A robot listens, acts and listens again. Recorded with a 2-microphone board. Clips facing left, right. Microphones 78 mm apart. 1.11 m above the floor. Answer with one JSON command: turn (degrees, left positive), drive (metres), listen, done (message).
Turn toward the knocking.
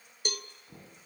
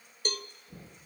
{"turn": 90}
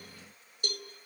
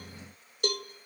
{"listen": true}
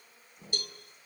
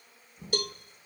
{"done": "Found it: knocking, straight ahead."}